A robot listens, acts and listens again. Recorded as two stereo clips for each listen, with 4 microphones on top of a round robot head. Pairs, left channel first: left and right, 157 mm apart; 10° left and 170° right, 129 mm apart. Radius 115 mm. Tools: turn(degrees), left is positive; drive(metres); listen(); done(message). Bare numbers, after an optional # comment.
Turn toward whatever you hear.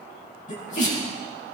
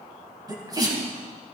# The sneeze: 130° left.
turn(130)
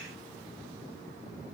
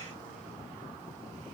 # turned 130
done("I heard a sneeze from this way, but can't make it out now.")